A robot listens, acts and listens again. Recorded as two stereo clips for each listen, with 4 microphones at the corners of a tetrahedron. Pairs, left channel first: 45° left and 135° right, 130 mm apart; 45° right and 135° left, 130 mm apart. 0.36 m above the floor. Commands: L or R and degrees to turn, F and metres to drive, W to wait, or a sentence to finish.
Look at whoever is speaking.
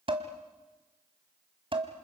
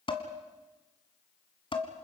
W
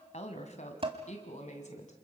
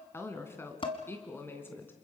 L25
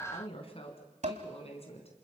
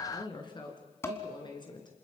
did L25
Facing the woman speaking, 2 to 4 m away.